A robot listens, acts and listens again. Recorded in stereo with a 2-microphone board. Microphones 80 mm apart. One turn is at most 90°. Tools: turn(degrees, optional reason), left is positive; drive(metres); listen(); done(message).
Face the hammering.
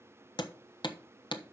turn(degrees=75, reason="The hammering: about 75° left or 105° left.")
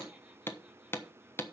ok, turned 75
turn(degrees=30, reason="So it is at 30° left.")
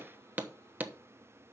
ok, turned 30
turn(degrees=-20, reason="The hammering is now 20° right.")
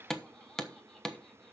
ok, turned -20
done("Found it: hammering, straight ahead, 1 to 2 m away.")